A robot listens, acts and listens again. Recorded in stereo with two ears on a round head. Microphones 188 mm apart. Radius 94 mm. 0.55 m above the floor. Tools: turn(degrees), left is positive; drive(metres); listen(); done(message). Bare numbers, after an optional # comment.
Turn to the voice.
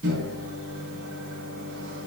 listen()
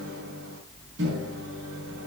listen()
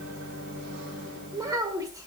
# The child speaking: about 15° right or 165° right.
turn(-15)
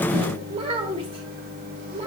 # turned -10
# The child speaking: about 25° right or 155° right.
turn(-25)
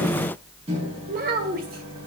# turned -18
# So it is at 130° right.
turn(-130)
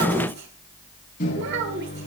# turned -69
# The child speaking is now 60° right.
turn(-60)
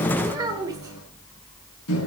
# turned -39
# The child speaking is now 20° right.
turn(-20)
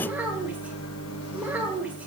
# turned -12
# The child speaking is now 10° right.
turn(-10)
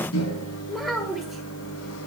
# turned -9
done("Facing the child speaking, 1 to 2 m away.")